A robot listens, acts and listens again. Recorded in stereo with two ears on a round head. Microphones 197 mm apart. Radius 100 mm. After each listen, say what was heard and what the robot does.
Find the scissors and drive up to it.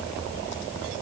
Keep listening.
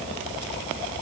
Keep listening.
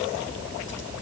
I can't make out scissors to turn to.